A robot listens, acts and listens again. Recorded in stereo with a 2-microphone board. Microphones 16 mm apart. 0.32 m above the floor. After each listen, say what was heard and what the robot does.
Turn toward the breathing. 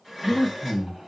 The breathing: about 30° right or 150° right. Turn 30° right.
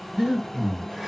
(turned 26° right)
So it is at 110° right. Turn 110° right.
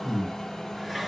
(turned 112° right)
Facing the breathing, 2 to 4 m away.